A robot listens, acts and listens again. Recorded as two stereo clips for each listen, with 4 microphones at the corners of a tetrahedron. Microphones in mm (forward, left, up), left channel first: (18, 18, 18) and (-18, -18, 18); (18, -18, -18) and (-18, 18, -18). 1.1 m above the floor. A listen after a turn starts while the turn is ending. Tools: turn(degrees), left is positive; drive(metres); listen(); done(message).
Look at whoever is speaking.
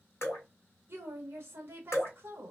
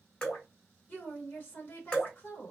turn(degrees=-100)
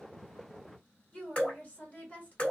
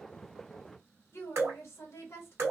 turn(degrees=-15)
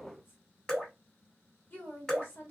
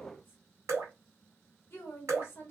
done("Found it: a woman speaking, straight ahead, 1 to 2 m away.")